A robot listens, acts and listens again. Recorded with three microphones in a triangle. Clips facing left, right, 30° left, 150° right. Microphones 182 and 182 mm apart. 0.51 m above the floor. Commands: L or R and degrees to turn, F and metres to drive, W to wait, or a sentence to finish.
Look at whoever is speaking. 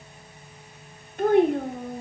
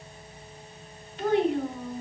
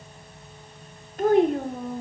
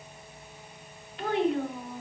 L65
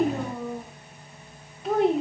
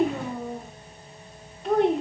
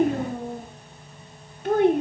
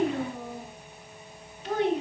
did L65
Found it: a child speaking, straight ahead.